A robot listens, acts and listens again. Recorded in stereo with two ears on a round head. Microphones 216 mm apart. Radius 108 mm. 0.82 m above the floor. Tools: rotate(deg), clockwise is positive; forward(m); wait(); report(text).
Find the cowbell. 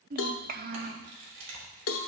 rotate(-60)
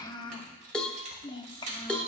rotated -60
report("Facing the cowbell.")